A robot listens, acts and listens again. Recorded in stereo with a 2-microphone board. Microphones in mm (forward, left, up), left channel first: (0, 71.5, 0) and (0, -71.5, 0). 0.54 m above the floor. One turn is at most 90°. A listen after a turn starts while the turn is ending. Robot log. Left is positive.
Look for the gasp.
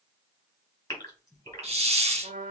note: The gasp: about 25° left or 155° left.
cmd yaw +25
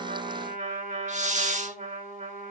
cmd idle
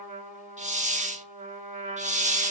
end: I heard a gasp, but can't make it out now. It was about straight ahead or 130° left.